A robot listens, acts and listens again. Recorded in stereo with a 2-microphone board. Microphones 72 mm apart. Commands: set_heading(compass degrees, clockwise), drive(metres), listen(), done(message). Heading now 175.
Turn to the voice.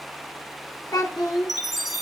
set_heading(105)
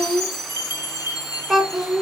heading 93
done("Facing the child speaking, 1 to 2 m away.")